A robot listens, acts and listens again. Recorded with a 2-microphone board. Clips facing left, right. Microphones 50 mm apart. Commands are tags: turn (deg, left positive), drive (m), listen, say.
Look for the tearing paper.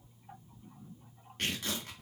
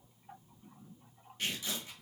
<turn deg="65"/>
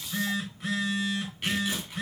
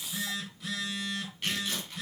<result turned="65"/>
<turn deg="15"/>
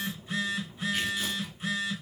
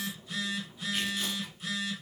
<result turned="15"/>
<listen/>
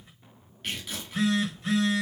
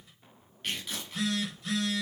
<say>Found it: tearing paper, straight ahead.</say>